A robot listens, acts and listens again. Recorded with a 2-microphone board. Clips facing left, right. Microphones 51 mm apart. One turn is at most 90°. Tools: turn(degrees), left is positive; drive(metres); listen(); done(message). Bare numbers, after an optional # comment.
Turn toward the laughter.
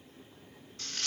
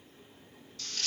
listen()
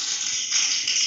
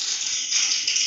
listen()
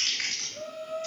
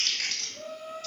# The laughter: about 40° left or 140° left.
turn(40)
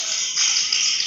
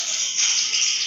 listen()
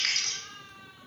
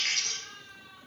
# So it is at 10° left.
turn(10)
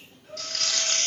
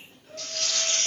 # The laughter is now 10° left.
turn(10)
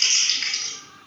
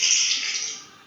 listen()
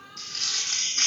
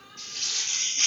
done("Facing the laughter, 2 to 4 m away.")